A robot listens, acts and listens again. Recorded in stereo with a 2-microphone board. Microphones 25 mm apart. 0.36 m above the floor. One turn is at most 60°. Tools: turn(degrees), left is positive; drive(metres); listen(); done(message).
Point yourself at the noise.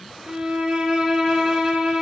turn(degrees=-35)
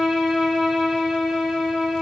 done("Found it: a violin, straight ahead.")